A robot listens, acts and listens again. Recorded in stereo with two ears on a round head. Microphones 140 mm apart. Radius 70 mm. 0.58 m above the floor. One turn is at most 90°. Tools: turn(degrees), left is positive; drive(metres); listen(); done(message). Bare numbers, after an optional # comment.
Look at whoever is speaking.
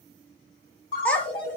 turn(30)
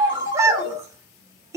# So it is at 20° right.
turn(-20)
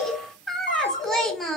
done("Facing the child speaking.")